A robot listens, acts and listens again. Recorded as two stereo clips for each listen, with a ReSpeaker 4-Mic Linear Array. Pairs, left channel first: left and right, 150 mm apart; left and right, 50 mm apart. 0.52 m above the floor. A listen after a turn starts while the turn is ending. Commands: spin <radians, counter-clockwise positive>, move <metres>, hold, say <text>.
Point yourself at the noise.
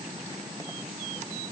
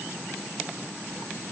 hold
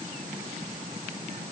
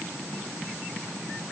hold
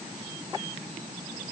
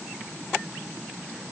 say I can't make out anything to turn to.